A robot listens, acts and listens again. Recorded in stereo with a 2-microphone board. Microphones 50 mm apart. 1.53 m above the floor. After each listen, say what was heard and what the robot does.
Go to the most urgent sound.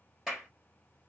Keep listening.
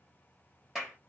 Keep listening.
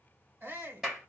The shout: about 40° right or 140° right. Turn 40° right.
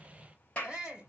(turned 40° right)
Drive 1.0 m forward.
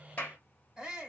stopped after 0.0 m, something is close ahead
Something is in my way. I am facing the shout but have not reached it.